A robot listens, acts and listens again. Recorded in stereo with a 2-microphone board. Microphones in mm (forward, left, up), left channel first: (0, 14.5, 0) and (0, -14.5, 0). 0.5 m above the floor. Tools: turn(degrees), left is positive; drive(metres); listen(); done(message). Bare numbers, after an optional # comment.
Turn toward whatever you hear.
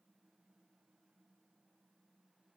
listen()
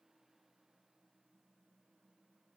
listen()
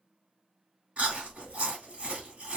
# The chewing: about 50° right or 130° right.
turn(-50)
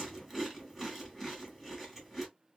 done("Found it: chewing, straight ahead, 1 to 2 m away.")